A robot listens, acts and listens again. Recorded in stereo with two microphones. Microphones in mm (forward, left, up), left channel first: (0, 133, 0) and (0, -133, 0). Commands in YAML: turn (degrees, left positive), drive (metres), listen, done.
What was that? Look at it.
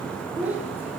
turn: -30
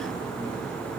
listen: true
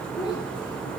turn: 15
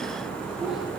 listen: true
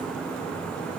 listen: true
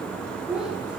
done: "Found it: a child speaking, straight ahead."